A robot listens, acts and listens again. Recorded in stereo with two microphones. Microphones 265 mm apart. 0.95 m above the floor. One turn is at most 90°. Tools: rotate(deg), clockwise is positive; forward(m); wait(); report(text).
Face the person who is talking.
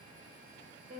wait()
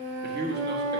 rotate(40)
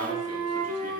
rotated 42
wait()
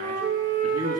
rotate(90)
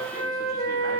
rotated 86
rotate(15)
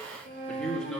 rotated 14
report("Found it: a man speaking, straight ahead.")